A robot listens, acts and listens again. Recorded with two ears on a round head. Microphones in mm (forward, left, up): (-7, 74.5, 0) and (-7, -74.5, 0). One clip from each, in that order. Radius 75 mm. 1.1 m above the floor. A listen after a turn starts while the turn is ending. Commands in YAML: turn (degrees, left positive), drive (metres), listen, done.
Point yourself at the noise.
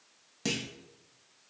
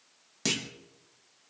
turn: -25
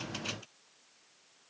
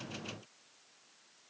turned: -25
listen: true
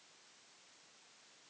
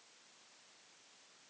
done: "I heard a clunk, but can't make it out now. It was about straight ahead or 130° right."